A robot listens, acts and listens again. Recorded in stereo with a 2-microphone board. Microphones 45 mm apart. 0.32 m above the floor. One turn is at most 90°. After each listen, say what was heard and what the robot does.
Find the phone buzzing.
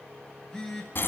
Turn 30° left.
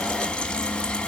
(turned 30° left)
Keep listening.
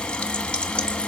Keep listening.
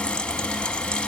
I heard a phone buzzing, but can't make it out now. It was about 15° right or 135° left.